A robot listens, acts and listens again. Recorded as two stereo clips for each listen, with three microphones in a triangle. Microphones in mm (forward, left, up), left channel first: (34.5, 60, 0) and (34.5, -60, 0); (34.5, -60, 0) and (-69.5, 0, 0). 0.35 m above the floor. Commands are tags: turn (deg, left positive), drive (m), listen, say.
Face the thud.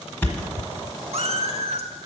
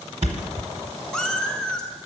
<turn deg="165"/>
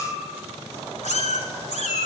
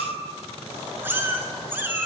<say>Facing where the thud came from. I can't hear it now.</say>